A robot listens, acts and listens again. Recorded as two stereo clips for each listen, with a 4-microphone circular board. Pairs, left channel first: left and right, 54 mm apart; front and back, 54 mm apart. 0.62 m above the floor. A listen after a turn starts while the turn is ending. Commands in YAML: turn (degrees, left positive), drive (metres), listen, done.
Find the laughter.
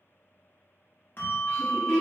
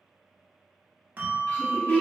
turn: 50
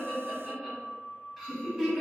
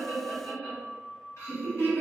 done: "Facing the laughter, 1 to 2 m away."